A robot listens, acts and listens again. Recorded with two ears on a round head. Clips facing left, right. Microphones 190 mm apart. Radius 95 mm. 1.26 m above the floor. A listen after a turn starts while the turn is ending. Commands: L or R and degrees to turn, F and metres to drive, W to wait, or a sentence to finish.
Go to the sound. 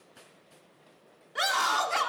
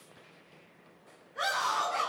L90
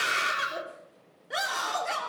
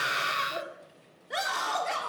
F1.0
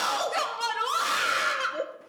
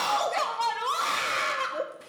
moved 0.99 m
L10
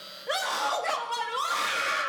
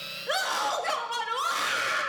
F1.0
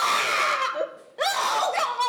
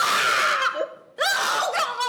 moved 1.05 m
R10
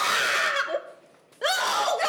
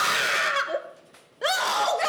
F1.0
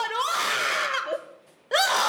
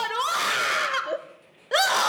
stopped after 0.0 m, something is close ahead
Arrived at the scream, straight ahead.